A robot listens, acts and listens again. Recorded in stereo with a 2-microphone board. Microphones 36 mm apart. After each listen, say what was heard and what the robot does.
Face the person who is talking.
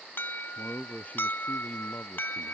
The man speaking: about 40° left or 140° left. Turn 40° left.
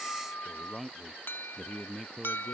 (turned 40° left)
Facing the man speaking.